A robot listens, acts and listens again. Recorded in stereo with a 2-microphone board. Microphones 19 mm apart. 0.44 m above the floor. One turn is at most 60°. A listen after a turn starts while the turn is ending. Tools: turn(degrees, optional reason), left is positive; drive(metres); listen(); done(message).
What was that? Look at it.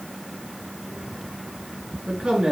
turn(degrees=-55, reason="The man speaking: about 55° right or 125° right.")
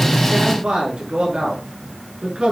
turn(degrees=-60, reason="So it is at 60° right.")
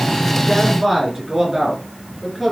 done("Found it: a man speaking, straight ahead, over 4 m away.")